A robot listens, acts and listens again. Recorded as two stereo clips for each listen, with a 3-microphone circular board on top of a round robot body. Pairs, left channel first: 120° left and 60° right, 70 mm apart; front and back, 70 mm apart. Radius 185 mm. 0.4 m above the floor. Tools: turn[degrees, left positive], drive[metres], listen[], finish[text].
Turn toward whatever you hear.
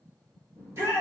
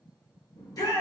Thought: The shout: 10° right.
Action: turn[-10]
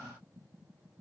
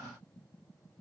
Action: listen[]
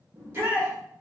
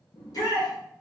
Action: finish[Facing the shout.]